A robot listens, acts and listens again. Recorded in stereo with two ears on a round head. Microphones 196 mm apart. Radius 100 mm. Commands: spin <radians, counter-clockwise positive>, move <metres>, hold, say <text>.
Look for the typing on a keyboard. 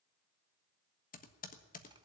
spin 0.70
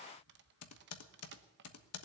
spin 1.75
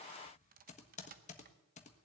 spin 0.52
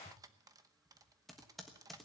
say Found it: typing on a keyboard, straight ahead, 1 to 2 m away.